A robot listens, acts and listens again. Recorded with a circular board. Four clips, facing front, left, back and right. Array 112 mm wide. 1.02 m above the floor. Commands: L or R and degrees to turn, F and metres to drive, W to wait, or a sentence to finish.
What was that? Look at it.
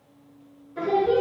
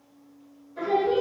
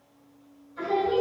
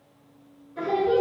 R15
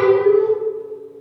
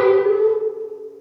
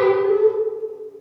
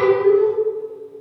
Found it: singing, straight ahead, 1 to 2 m away.